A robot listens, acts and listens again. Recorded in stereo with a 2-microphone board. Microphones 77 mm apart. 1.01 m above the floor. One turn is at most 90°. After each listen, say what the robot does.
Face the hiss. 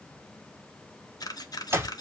Keep listening.
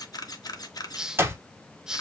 Turn 30° right.
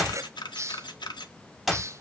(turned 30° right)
Turn 90° right.
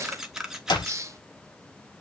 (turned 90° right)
Turn 45° right.
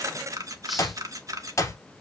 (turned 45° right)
Keep listening.
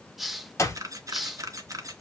Found it: a hiss, straight ahead.